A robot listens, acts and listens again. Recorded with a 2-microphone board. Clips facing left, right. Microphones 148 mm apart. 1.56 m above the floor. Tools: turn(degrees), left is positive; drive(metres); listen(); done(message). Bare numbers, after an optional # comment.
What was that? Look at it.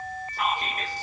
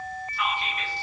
# The whispering: about 40° left or 140° left.
turn(40)
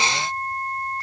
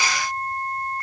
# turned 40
listen()
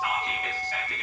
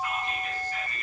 # So it is at 100° left.
turn(100)
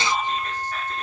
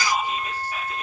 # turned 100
# The whispering is now 10° right.
turn(-10)
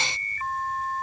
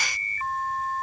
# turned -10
listen()
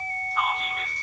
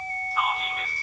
done("Found it: whispering, straight ahead.")